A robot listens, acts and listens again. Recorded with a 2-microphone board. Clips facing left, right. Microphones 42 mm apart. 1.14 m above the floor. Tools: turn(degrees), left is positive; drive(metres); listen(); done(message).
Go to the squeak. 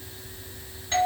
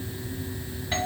listen()
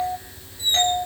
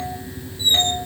turn(degrees=-90)
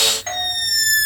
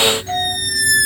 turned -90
turn(degrees=-10)
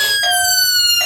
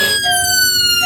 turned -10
drive(metres=1.0)
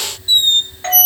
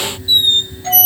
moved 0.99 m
drive(metres=1.0)
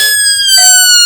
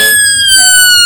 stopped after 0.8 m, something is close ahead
turn(degrees=-15)
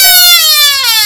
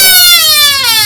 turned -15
done("I am next to the squeak.")